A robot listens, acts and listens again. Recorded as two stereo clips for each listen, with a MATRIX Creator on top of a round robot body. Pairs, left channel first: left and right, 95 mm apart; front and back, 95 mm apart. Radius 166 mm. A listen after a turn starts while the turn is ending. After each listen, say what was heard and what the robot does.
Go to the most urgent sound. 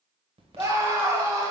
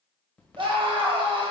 The scream: 145° right. Turn 145° right.
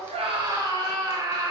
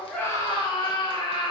The scream is now 40° right. Turn 40° right.
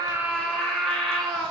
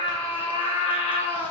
Drive 1.0 m forward.
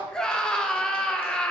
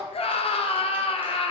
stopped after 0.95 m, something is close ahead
The scream is now 10° left. Turn 10° left.
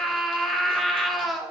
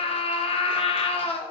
I am next to the scream.